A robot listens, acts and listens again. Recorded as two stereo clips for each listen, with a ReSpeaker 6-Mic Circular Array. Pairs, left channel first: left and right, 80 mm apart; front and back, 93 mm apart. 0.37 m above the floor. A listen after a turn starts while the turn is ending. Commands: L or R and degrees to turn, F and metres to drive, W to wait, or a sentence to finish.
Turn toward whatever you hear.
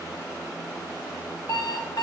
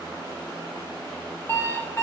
L65
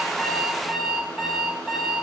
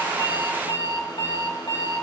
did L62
Facing the alarm clock, 1 to 2 m away.